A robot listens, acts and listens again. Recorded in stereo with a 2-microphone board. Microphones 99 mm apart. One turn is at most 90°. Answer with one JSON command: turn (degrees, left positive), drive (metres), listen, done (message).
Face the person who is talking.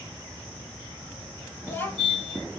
{"turn": 25}
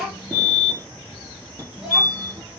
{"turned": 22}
{"done": "Found it: a child speaking, straight ahead."}